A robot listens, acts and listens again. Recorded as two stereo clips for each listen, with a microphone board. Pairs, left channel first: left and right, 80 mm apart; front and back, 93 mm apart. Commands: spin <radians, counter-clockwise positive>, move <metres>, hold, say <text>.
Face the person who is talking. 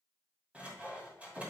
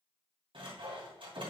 hold
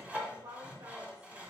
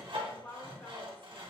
spin -1.22
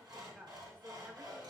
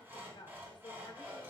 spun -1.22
spin -0.44
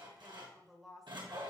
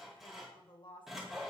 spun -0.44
say Facing the woman speaking, 1 to 2 m away.